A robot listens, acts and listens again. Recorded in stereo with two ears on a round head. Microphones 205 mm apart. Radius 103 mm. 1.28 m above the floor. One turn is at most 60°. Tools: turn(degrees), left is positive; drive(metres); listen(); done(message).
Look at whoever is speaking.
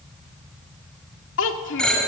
turn(degrees=55)
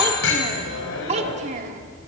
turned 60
turn(degrees=-35)
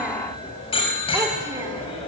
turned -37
listen()
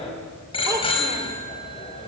listen()
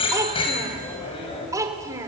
turn(degrees=-15)
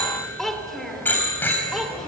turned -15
done("Found it: a child speaking, straight ahead.")